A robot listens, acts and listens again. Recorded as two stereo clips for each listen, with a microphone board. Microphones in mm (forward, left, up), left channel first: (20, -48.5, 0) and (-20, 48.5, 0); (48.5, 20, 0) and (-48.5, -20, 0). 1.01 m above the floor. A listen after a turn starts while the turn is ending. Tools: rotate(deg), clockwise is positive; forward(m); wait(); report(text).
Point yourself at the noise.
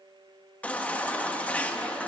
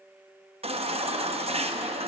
rotate(145)
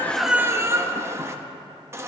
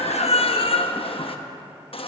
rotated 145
rotate(-50)
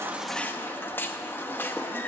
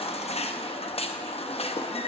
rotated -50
report("Facing the baby crying, under 1 m away.")